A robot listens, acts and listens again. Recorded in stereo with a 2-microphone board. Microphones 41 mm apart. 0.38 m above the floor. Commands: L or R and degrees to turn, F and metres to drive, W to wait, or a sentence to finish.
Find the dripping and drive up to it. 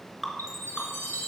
L30
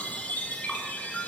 W
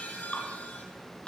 W
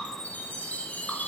I heard dripping, but can't make it out now. It was about 30° right or 150° left. I did not reach it.